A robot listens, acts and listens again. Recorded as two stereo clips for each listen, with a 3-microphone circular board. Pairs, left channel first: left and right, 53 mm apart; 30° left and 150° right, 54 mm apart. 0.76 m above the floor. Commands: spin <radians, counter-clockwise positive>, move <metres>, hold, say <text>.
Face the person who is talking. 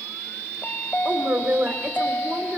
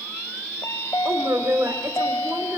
spin -2.53
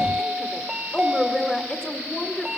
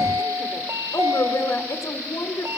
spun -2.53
spin 0.17
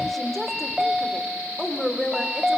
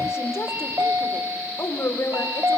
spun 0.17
say Found it: a woman speaking, straight ahead.